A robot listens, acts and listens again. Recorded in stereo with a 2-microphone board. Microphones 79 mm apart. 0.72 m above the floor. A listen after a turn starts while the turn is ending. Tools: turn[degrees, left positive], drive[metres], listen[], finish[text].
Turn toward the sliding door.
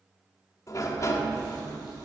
Thought: The sliding door: about 45° left or 135° left.
Action: turn[45]
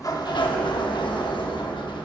Thought: So it is at 90° left.
Action: turn[90]
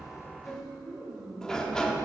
Thought: The sliding door is now 10° left.
Action: turn[10]
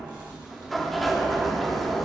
Action: finish[Found it: a sliding door, straight ahead, under 1 m away.]